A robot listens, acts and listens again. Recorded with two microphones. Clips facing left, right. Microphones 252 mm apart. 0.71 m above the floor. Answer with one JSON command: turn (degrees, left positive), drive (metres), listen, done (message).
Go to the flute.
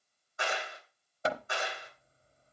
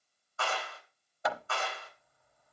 {"listen": true}
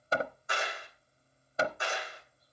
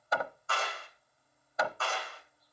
{"listen": true}
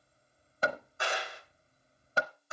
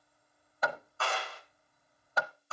{"done": "I can't make out a flute, only hammering and a clap."}